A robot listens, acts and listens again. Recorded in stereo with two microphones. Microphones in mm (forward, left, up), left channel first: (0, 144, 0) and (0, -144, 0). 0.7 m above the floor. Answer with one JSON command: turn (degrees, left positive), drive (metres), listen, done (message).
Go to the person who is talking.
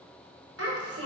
{"turn": -50}
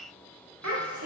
{"turn": -80}
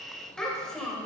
{"drive": 1.0}
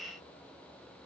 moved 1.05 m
{"listen": true}
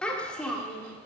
{"drive": 1.0}
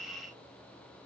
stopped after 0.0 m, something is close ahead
{"listen": true}
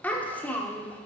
{"done": "Arrived at the child speaking, straight ahead."}